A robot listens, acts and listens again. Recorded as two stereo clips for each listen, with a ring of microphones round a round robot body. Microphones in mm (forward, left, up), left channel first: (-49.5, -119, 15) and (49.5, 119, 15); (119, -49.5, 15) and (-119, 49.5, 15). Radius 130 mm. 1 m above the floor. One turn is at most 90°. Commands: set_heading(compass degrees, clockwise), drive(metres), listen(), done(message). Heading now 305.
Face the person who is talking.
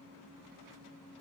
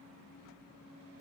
listen()
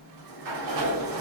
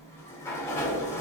listen()
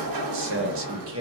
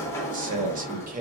set_heading(215)
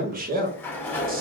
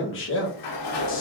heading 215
set_heading(200)
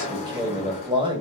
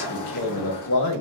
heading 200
done("Found it: a man speaking, straight ahead.")